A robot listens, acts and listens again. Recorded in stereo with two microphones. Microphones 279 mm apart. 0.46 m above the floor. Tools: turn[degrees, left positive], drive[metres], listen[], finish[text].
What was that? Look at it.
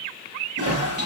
Thought: The toilet flushing: about 55° right or 125° right.
Action: turn[-55]
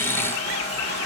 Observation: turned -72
Thought: So it is at 55° right.
Action: turn[-55]
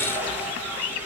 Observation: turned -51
Action: finish[Found it: a toilet flushing, straight ahead.]